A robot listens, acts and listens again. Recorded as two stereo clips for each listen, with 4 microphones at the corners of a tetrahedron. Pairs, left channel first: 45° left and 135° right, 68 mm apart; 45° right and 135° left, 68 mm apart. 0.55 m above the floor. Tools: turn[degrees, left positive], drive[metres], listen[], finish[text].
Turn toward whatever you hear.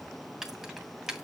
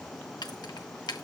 Thought: The keys jangling: 55° right.
Action: turn[-55]
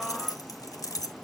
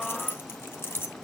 Thought: The keys jangling is now 10° left.
Action: turn[10]
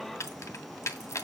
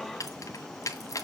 Action: finish[Facing the keys jangling.]